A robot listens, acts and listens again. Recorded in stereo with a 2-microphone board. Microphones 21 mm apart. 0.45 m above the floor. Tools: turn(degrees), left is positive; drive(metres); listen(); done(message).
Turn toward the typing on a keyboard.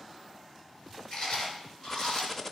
turn(degrees=20)
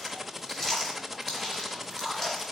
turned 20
done("Found it: typing on a keyboard, straight ahead, under 1 m away.")